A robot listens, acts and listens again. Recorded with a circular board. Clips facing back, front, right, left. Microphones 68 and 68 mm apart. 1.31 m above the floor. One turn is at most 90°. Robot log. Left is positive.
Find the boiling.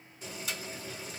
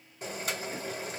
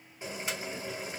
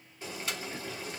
note: The boiling: 20° right.
cmd yaw -20
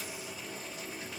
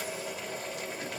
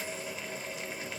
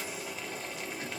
end: Found it: boiling, straight ahead, 2 to 4 m away.